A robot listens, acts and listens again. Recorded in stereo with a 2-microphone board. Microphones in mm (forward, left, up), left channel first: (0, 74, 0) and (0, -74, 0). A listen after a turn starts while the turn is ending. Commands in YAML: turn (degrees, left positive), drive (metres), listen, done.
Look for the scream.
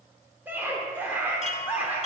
turn: -30
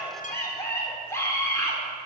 turn: 20
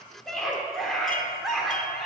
done: "Found it: a scream, straight ahead, 1 to 2 m away."